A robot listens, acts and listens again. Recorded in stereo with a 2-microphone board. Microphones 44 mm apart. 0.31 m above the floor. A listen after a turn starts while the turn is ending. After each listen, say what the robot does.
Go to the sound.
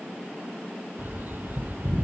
Turn 50° right.
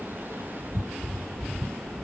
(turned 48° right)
Turn 80° right.
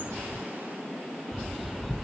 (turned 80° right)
Drive 1.0 m forward.
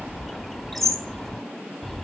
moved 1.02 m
Drive 1.0 m forward.
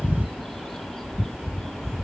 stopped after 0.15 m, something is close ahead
I am next to the bird.